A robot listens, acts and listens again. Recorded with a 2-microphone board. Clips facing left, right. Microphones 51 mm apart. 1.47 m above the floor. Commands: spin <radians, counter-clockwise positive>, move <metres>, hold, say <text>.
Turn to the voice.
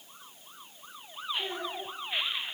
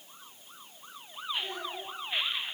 spin 0.61
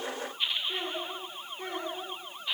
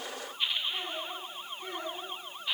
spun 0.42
spin 1.83
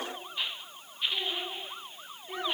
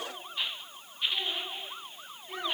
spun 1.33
spin 0.17
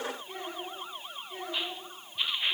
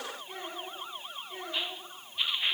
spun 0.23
say Facing the child speaking.